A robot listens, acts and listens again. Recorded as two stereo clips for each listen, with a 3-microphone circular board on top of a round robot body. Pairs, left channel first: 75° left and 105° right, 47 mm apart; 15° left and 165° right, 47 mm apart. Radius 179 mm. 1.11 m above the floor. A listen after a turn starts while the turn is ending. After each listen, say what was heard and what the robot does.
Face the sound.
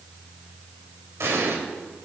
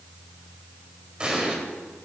The explosion: 100° right. Turn 100° right.
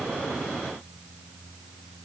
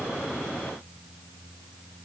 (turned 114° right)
Nothing new. It was at 15° left. Turn 15° left.
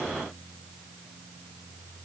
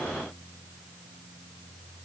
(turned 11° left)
I heard an explosion from this way, but can't make it out now.